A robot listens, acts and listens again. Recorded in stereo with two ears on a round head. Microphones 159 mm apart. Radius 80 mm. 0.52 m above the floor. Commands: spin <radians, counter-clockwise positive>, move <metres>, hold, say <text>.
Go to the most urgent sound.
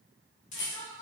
spin 1.31
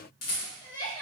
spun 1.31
spin 0.52
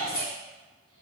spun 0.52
move 1.0
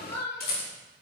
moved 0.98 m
spin 0.26
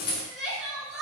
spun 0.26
move 1.0
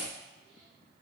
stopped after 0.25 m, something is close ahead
hold
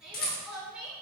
say I am next to the crying.